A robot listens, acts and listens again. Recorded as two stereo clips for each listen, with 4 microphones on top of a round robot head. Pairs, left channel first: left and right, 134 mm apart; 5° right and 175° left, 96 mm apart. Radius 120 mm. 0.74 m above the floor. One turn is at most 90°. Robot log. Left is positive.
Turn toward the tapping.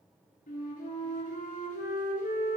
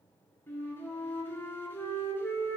cmd idle
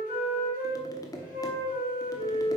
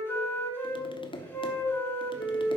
note: The tapping: 25° left.
cmd yaw +25
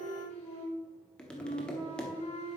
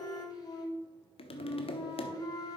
end: Facing the tapping, 1 to 2 m away.